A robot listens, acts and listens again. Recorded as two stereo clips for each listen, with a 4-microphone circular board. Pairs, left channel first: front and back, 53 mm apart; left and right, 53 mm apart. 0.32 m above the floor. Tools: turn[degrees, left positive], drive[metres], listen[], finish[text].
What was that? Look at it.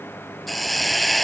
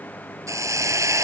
Thought: The hiss: 90° right.
Action: turn[-90]
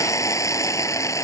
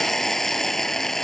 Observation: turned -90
Action: finish[Facing the hiss.]